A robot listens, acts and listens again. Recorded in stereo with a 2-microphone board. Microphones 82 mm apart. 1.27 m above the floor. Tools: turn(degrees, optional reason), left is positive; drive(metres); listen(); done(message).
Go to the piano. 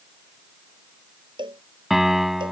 turn(degrees=-30)
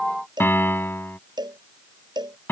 turn(degrees=25, reason="So it is at 25° left.")
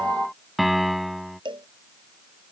drive(metres=1.0)
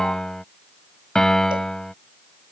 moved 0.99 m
drive(metres=1.0)
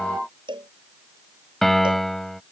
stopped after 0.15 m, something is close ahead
done("Blocked. The piano is further on, straight ahead.")